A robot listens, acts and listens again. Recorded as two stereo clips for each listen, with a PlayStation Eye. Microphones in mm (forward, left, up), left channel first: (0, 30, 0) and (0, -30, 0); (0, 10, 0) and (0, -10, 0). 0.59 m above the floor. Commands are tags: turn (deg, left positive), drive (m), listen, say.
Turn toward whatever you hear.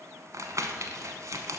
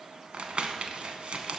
<turn deg="-65"/>
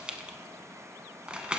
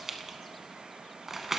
<turn deg="-20"/>
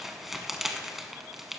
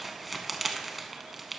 <say>Found it: crumpling, straight ahead.</say>